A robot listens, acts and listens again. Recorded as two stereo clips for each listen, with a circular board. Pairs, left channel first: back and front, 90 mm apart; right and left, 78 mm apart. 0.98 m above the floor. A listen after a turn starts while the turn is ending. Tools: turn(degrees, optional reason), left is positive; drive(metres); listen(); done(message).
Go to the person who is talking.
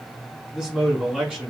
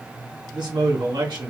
turn(degrees=80, reason="The man speaking: 80° left.")
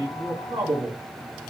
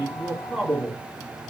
drive(metres=1.0)
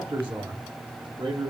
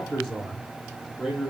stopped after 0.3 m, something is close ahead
done("Something is in my way. I am facing the man speaking but have not reached it.")